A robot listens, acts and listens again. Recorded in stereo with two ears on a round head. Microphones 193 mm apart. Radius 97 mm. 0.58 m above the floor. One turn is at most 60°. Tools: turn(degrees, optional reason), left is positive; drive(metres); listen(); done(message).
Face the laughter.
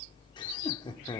turn(degrees=20, reason="The laughter: about 20° left or 160° left.")
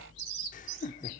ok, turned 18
turn(degrees=60, reason="So it is at 145° left.")
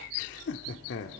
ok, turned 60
turn(degrees=60, reason="The laughter is now 75° left.")
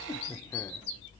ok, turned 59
turn(degrees=15, reason="The laughter is now 15° left.")
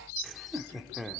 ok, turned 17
done("Facing the laughter, 1 to 2 m away.")